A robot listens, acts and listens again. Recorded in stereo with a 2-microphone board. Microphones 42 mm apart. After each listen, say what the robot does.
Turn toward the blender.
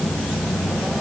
Keep listening.
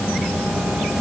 Keep listening.
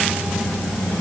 I can't make out a blender to turn to.